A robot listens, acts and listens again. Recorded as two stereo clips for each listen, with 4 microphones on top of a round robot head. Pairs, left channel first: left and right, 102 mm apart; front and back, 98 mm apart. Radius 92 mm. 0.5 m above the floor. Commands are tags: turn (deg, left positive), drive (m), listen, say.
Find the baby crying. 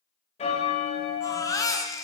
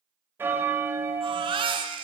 <turn deg="145"/>
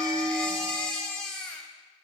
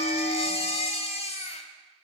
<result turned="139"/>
<say>Facing the baby crying, 1 to 2 m away.</say>